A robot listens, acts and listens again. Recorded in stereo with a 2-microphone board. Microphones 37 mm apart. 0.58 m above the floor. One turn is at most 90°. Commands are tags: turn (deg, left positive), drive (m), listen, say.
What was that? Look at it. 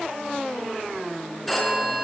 <turn deg="30"/>
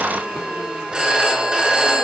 <turn deg="-25"/>
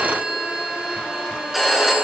<turn deg="-10"/>
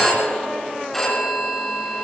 <say>Found it: a phone ringing, straight ahead.</say>